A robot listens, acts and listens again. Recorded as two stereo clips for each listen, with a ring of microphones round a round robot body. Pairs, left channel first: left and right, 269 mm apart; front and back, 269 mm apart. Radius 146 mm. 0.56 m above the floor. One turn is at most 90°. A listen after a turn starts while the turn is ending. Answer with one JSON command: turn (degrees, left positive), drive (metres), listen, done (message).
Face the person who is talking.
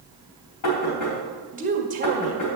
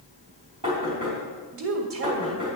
{"turn": -90}
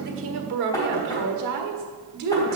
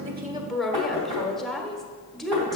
{"turn": -90}
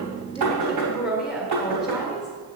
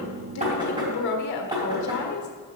{"done": "Facing the woman speaking, 1 to 2 m away."}